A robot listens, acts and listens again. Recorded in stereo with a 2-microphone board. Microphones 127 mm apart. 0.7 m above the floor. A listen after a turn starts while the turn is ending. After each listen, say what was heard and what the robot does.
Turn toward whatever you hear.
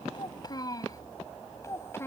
The child speaking: about 20° left or 160° left. Turn 20° left.
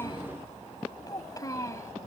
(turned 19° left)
The child speaking: about 25° left or 155° left. Turn 25° left.
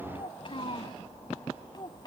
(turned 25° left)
The child speaking: about 35° left or 145° left. Turn 35° left.
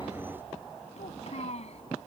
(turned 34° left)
So it is at 120° left. Turn 120° left.
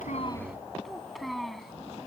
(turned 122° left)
Facing the child speaking.